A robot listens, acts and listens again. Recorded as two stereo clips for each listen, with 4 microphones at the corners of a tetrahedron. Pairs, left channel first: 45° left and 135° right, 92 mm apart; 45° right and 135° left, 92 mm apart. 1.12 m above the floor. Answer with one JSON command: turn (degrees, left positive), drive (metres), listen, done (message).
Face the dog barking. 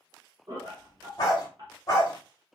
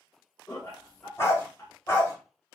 {"done": "Facing the dog barking."}